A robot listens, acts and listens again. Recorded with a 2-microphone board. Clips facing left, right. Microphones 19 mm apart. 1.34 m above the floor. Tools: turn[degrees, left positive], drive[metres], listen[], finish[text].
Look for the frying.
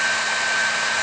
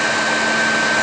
Action: listen[]
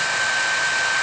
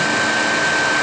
Action: listen[]
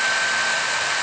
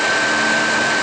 Action: finish[I can't make out frying to turn to.]